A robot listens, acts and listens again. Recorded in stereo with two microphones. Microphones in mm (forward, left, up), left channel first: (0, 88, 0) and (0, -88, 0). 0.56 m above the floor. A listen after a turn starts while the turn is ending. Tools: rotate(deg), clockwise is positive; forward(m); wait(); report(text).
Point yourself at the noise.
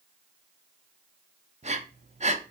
rotate(40)
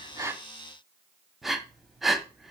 report("Facing the breathing.")